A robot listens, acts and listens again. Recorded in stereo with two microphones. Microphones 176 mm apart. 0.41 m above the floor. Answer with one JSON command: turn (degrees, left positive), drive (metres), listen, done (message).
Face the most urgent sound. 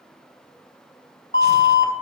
{"turn": 55}
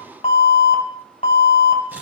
{"turn": 45}
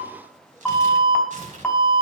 {"turn": 10}
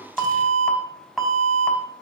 {"done": "Facing the alarm."}